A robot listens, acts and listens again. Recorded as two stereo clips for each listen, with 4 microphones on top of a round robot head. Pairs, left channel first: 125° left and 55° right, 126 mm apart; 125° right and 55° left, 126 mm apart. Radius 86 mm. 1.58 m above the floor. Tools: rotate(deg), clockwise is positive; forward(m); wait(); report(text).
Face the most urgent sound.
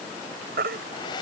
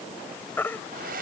rotate(50)
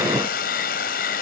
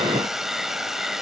wait()
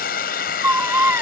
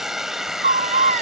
rotate(-20)
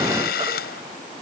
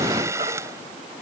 wait()
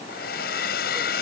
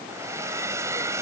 wait()
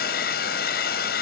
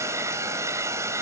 report("I heard a baby crying from this way, but can't make it out now.")